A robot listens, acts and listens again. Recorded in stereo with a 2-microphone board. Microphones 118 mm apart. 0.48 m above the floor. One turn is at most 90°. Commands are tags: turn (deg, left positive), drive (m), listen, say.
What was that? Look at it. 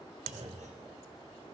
<turn deg="-90"/>
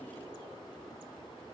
<say>I heard a clunk from this way, but can't make it out now.</say>